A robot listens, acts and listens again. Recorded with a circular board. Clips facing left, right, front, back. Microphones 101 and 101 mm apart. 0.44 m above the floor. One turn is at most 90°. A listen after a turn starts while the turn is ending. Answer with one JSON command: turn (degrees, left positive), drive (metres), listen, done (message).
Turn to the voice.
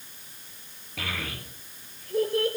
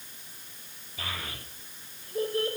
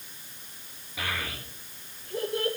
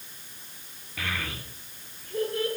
{"turn": 70}
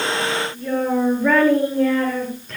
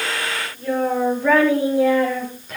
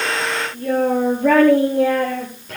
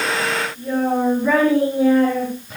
{"done": "Facing the child speaking."}